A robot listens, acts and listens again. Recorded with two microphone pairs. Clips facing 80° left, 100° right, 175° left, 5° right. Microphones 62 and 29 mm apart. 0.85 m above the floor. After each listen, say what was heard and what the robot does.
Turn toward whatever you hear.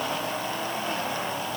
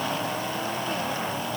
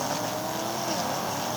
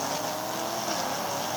Keep listening.
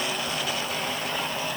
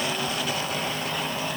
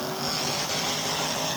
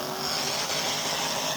Keep listening.
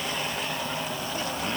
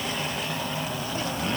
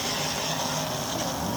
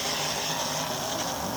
I can't make out anything to turn to.